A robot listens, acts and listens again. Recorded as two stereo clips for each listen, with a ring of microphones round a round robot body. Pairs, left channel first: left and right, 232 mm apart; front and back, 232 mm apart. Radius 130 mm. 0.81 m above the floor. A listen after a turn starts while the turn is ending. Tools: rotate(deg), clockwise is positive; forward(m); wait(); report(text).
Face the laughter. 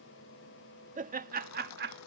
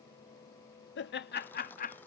rotate(50)
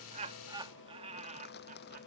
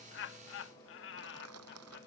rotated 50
rotate(35)
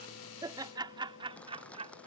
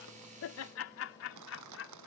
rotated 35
rotate(25)
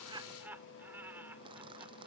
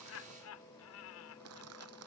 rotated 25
rotate(10)
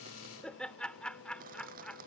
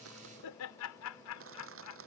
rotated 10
report("Found it: laughter, straight ahead.")